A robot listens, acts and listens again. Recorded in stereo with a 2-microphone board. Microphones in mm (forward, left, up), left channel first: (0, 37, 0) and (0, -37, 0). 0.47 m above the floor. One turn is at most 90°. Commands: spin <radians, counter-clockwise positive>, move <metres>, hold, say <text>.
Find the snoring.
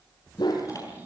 spin -0.35
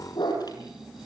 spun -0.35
say Found it: snoring, straight ahead, over 4 m away.